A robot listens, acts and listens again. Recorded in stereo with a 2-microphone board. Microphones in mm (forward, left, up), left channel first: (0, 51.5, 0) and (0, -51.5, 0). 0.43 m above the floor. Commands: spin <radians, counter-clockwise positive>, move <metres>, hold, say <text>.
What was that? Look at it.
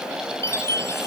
spin 0.44
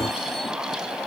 hold
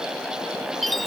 say Facing the chime.